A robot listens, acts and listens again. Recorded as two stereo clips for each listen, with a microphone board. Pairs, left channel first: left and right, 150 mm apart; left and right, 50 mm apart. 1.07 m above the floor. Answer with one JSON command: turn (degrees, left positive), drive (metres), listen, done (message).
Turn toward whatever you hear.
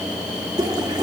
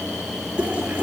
{"turn": -25}
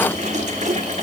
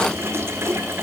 {"turn": -130}
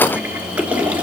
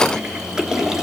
{"turn": -10}
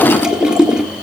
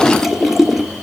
{"done": "Facing the toilet flushing."}